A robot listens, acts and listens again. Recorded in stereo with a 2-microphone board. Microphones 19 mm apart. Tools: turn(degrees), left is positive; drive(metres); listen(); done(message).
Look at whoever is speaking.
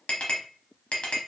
listen()
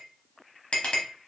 listen()
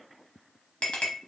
done("I can't make out anyone speaking to turn to.")